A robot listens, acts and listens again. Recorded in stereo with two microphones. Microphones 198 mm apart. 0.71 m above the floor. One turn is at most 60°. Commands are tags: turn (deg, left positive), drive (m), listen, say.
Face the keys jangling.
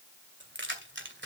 <turn deg="-60"/>
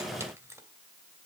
<turn deg="-15"/>
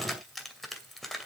<say>Found it: keys jangling, straight ahead, 2 to 4 m away.</say>